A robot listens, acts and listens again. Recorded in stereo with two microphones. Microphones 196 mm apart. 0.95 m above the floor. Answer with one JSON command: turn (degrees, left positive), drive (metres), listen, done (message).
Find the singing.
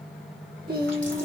{"turn": -55}
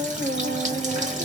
{"turn": -60}
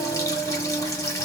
{"done": "Found it: singing, straight ahead."}